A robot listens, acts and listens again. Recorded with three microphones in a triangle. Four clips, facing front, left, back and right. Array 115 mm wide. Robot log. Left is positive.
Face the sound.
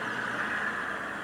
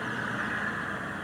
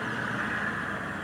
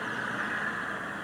cmd idle
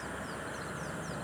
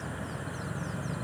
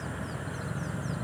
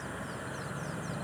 cmd idle
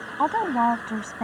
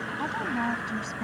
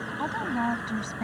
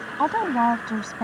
note: The woman speaking: 55° right.
cmd yaw -55
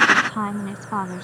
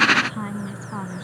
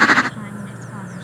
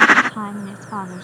note: The woman speaking is now 30° right.
cmd yaw -30
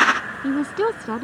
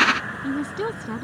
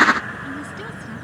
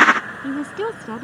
note: The woman speaking is now 15° right.
cmd yaw -15
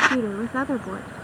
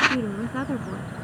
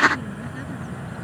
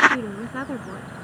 end: Found it: a woman speaking, straight ahead.